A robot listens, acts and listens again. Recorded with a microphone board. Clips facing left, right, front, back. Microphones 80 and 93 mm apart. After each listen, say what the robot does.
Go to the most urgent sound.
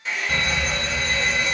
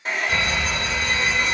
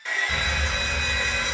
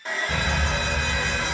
Turn 140° left.
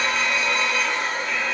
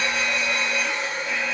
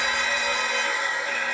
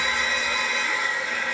Turn 25° right.
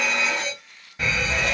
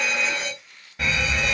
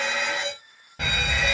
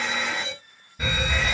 Drive 1.0 m forward.
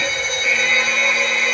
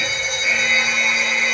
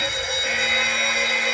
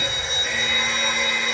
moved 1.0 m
Turn 15° right.
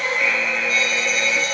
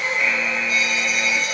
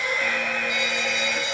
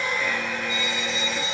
Drive 1.0 m forward.
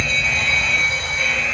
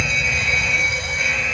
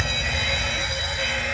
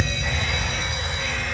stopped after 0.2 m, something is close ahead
Turn 15° right.
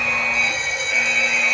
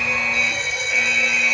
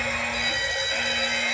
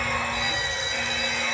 Arrived at the fire alarm, straight ahead.